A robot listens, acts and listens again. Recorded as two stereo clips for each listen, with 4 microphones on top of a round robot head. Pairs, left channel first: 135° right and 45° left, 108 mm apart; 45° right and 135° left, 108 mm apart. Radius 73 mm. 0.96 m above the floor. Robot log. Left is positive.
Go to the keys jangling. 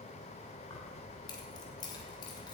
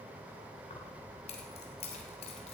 note: The keys jangling: 80° right.
cmd yaw -80
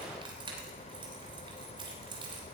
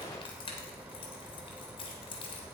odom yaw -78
cmd fwd 1.0
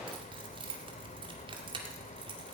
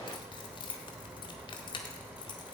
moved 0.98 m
cmd fwd 1.0
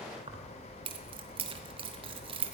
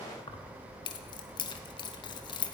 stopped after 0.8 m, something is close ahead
end: Arrived at the keys jangling, straight ahead.